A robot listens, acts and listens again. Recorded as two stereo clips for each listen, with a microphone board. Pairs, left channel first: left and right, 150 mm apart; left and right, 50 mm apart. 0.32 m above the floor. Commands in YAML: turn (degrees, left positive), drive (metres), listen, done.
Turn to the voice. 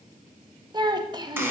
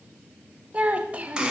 turn: -30
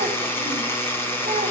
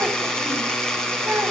listen: true
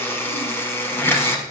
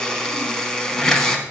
listen: true
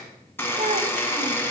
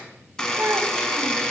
turn: -120
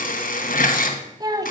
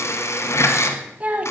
turn: -30
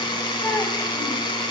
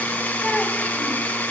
listen: true
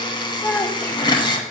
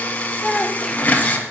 turn: 15
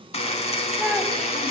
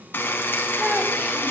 listen: true
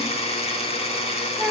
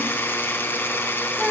done: "Facing the child speaking, 1 to 2 m away."